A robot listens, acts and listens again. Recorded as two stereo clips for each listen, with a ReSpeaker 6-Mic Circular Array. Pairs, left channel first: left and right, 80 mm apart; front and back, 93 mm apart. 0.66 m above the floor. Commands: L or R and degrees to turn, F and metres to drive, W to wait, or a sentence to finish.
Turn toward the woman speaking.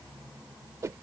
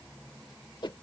W
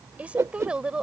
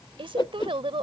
R170
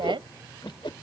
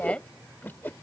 R75
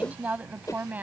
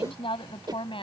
R20
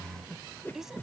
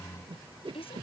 Found it: a woman speaking, straight ahead.